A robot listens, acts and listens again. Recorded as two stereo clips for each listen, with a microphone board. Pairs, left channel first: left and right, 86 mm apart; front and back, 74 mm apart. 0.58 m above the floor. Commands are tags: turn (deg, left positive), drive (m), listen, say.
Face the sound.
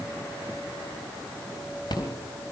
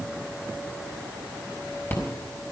<turn deg="60"/>
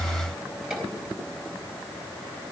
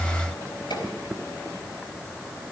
<turn deg="-10"/>
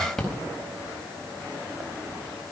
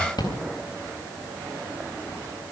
<say>Found it: a rattle, straight ahead.</say>